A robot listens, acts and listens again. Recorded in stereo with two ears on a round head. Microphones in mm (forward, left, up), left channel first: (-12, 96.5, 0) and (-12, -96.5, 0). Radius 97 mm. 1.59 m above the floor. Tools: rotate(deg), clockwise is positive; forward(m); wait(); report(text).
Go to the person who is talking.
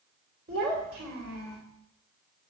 rotate(50)
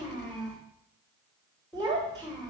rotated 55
forward(1.0)
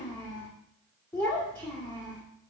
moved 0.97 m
rotate(-10)
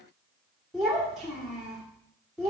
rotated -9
forward(1.0)
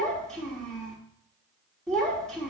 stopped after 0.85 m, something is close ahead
report("I am next to the child speaking.")